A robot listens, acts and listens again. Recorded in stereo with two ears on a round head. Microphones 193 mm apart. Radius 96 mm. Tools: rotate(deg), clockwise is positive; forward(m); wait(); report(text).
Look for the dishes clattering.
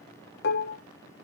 rotate(-55)
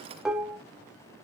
report("Found it: dishes clattering, straight ahead.")